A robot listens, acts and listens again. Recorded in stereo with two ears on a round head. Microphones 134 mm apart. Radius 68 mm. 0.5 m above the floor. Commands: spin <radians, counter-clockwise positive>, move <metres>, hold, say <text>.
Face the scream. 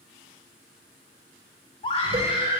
spin 0.61
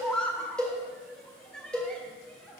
say Found it: a scream, straight ahead.